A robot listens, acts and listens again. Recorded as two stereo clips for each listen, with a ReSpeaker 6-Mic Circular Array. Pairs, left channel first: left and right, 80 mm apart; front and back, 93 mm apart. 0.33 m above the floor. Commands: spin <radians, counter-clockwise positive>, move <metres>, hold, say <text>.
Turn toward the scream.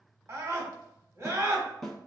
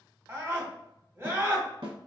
spin -2.27
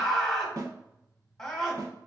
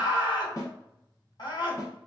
spin 0.17
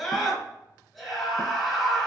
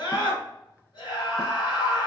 say Facing the scream, 1 to 2 m away.